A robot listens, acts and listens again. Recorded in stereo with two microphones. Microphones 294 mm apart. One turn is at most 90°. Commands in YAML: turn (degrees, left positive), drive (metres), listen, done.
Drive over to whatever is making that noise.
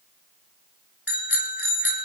turn: 45
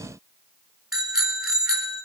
drive: 1.0
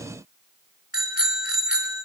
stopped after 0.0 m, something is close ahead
done: "Something is in my way. I am facing the bicycle bell but have not reached it."